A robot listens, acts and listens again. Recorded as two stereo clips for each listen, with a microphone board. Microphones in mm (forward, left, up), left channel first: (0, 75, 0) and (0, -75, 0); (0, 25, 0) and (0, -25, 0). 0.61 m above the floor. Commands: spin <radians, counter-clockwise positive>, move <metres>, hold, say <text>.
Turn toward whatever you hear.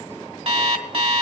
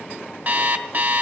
spin -0.79
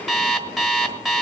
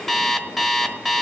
say Found it: an alarm clock, straight ahead.